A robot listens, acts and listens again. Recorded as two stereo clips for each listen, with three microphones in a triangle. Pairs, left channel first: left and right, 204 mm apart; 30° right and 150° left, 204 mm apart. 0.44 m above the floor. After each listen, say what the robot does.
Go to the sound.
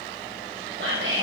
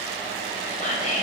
Turn 80° right.
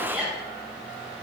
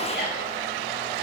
Drive 1.0 m forward.
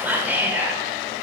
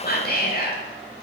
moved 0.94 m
Turn 10° right.
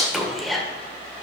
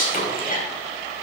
Drive 1.0 m forward.
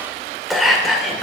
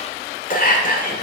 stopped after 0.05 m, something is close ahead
Arrived at the whispering, straight ahead.